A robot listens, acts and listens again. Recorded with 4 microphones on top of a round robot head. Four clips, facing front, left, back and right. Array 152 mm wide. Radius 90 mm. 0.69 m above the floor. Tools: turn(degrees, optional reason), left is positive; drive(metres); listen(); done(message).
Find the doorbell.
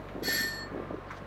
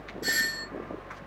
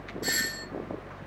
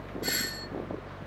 turn(degrees=130, reason="The doorbell: 130° left.")
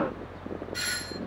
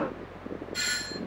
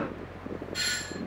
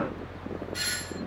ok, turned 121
turn(degrees=10, reason="The doorbell is now 10° left.")
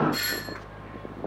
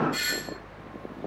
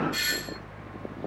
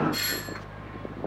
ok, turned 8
done("Found it: a doorbell, straight ahead.")